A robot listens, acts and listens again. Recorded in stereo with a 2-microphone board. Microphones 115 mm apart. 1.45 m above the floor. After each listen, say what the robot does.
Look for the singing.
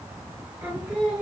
Turn 30° right.
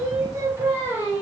Turn 20° right.
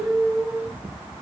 Turn 155° right.
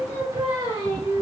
Turn 40° right.
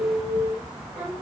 Turn 10° right.
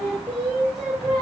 Facing the singing.